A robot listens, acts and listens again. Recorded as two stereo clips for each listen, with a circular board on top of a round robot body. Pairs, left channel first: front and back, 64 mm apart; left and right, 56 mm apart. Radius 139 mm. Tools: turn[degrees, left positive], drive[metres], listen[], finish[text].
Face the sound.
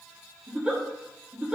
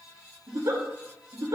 Thought: The giggle: 100° right.
Action: turn[-100]
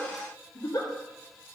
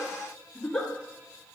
Thought: The giggle is now 15° left.
Action: turn[15]
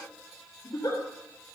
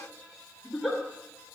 Action: finish[Facing the giggle, 2 to 4 m away.]